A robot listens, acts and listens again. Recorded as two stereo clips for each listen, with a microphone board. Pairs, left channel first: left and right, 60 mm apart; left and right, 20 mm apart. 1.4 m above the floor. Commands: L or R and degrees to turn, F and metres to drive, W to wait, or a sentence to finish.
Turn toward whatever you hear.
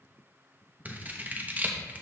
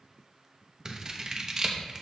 R30
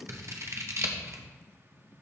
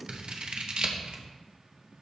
R115
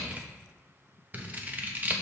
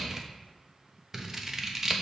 R35
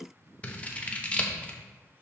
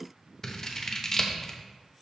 L25
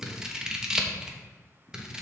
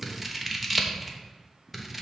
R15
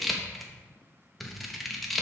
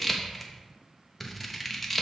Facing the scissors, 1 to 2 m away.